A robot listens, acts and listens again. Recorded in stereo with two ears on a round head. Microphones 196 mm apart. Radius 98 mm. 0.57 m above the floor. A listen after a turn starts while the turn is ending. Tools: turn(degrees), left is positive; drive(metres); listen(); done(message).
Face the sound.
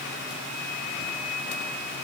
listen()
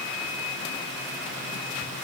listen()
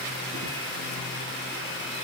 done("I can't make out anything to turn to.")